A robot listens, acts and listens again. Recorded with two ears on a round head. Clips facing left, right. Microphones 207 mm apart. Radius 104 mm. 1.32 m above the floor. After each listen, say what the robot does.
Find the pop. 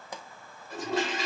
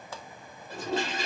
Turn 15° left.
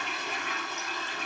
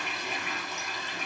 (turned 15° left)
Keep listening.
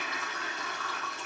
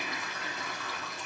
I heard a pop, but can't make it out now. It was about straight ahead or 150° left.